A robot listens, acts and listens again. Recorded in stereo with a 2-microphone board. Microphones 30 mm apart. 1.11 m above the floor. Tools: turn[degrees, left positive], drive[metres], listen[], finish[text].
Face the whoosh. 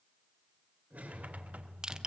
Thought: The whoosh: about 60° right or 120° right.
Action: turn[-60]
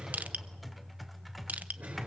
Action: listen[]
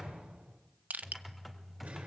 Thought: So it is at 65° right.
Action: turn[-65]
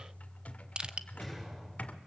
Thought: The whoosh is now 10° right.
Action: turn[-10]
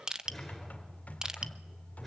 Action: listen[]
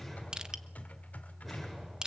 Action: listen[]
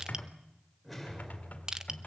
Action: finish[Facing the whoosh.]